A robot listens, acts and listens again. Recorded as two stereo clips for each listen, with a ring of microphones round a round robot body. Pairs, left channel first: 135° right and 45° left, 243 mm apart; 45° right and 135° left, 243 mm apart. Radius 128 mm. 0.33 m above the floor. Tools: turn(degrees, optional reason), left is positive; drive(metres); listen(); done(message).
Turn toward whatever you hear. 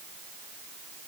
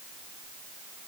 listen()
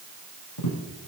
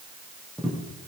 turn(degrees=-135, reason="The tapping: 135° right.")
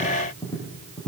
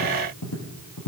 turn(degrees=-60, reason="The tapping is now 60° right.")
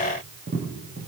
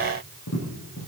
done("Facing the tapping.")